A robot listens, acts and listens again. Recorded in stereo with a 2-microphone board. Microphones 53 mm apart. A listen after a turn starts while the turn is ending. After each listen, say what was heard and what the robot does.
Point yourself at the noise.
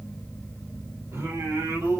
The singing: about 70° right or 110° right. Turn 70° right.
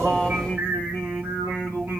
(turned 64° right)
So it is at 40° right. Turn 40° right.
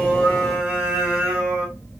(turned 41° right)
The singing is now 20° right. Turn 20° right.
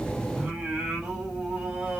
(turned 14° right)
The singing is now 15° right. Turn 15° right.
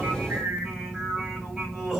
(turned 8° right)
Found it: singing, straight ahead, 2 to 4 m away.